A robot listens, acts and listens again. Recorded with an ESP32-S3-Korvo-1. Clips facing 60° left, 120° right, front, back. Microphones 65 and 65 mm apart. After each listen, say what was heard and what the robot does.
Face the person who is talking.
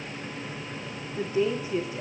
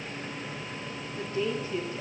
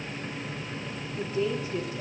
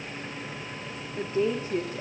The woman speaking: 135° left. Turn 135° left.
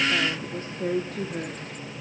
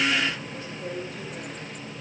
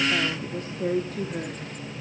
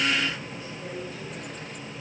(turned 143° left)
The woman speaking is now 25° left. Turn 25° left.
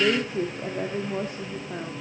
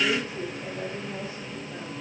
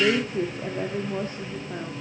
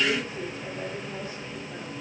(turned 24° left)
The woman speaking is now 40° left. Turn 40° left.
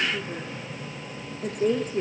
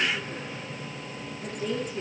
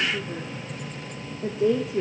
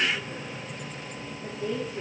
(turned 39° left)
The woman speaking is now 10° left. Turn 10° left.
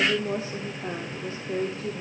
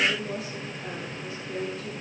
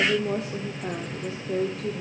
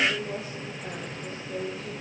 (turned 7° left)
Facing the woman speaking, 1 to 2 m away.